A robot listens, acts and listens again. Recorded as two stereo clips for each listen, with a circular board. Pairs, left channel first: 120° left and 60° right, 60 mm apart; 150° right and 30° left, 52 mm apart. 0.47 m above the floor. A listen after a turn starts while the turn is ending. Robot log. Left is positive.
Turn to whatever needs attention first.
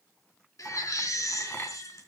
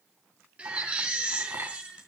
note: The baby crying: 95° left.
cmd yaw +95
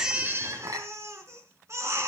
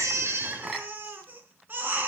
note: The baby crying is now 25° right.
cmd yaw -25
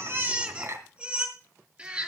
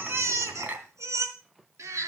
note: The baby crying is now 10° left.
cmd yaw +10
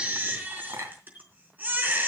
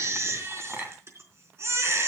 end: Found it: a baby crying, straight ahead, 2 to 4 m away.